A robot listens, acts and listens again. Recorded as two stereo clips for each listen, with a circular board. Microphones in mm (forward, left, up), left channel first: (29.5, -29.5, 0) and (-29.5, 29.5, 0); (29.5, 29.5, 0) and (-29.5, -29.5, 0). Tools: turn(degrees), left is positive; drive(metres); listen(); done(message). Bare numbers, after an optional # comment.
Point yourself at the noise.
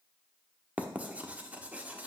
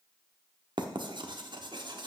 # The writing: 150° right.
turn(-150)
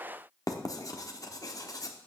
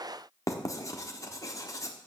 done("Found it: writing, straight ahead.")